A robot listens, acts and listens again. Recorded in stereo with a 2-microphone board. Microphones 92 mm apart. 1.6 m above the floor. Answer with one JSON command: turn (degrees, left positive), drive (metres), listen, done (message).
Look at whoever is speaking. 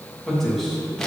{"turn": 30}
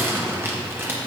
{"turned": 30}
{"listen": true}
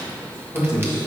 {"turn": 150}
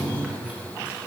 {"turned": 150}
{"listen": true}
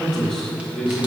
{"done": "Found it: a man speaking, straight ahead."}